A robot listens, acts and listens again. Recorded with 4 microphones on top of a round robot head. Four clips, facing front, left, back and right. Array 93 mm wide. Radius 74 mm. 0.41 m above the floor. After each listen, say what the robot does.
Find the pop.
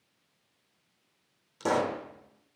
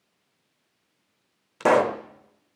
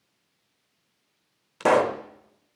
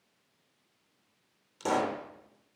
Turn 130° left.
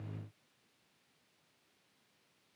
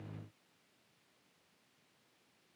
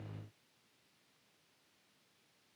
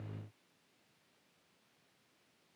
I heard a pop from this way, but can't make it out now.